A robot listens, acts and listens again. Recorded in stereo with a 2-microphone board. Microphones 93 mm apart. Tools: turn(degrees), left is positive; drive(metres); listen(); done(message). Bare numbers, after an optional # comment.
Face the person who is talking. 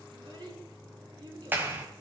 # The child speaking: about 55° right or 125° right.
turn(-55)
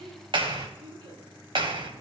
# So it is at 70° right.
turn(-70)
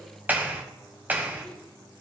listen()
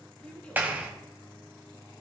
# The child speaking is now 10° left.
turn(10)
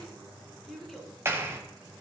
done("Facing the child speaking, 2 to 4 m away.")